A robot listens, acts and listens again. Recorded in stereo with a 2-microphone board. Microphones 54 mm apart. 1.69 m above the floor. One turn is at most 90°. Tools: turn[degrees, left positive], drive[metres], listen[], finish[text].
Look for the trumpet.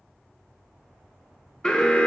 Action: listen[]
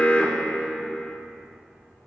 Action: listen[]
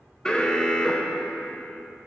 Action: finish[I can't make out a trumpet, only an alarm.]